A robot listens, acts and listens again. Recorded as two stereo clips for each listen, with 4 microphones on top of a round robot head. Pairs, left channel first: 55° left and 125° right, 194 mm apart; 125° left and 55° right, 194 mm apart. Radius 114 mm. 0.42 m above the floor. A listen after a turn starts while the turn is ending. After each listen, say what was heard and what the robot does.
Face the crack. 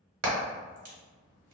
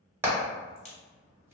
The crack: 175° right. Turn 175° right.
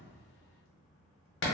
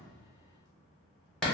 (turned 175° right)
I heard a crack from this way, but can't make it out now.